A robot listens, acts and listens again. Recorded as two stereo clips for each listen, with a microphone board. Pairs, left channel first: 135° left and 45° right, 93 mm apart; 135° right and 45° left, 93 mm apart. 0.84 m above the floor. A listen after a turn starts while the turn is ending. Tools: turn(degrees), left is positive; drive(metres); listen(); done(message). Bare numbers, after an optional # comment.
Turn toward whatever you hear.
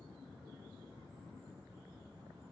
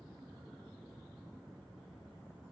listen()
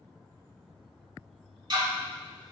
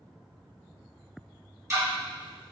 # The ticking: 10° right.
turn(-10)
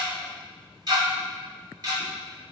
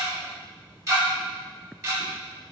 done("Found it: ticking, straight ahead.")